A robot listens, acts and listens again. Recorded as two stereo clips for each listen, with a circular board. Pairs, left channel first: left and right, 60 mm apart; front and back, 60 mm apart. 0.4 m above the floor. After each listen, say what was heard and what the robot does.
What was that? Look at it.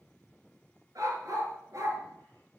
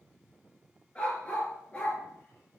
The dog barking: 60° right. Turn 60° right.
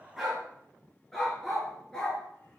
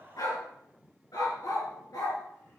The dog barking is now 10° left. Turn 10° left.
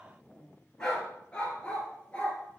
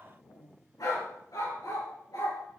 The dog barking is now 20° left. Turn 20° left.
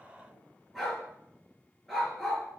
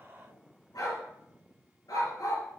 Facing the dog barking, 2 to 4 m away.